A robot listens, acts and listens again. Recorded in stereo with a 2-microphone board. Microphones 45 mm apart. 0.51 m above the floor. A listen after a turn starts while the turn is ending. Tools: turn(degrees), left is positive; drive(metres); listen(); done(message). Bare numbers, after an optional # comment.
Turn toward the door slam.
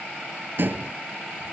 # The door slam: about 50° right or 130° right.
turn(-50)
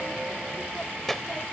listen()
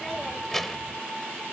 done("I heard a door slam, but can't make it out now. It was about straight ahead or 80° right.")